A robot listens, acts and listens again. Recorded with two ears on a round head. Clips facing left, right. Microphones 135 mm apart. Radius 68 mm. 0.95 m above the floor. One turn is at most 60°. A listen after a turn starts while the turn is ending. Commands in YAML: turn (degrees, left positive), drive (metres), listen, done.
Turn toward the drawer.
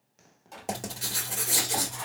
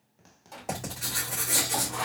turn: 30
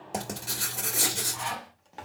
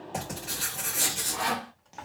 turn: 60
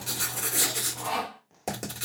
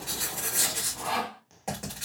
turn: 60
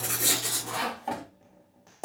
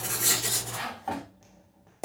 turn: 20
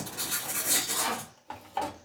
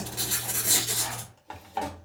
done: "Found it: a drawer, straight ahead, 1 to 2 m away."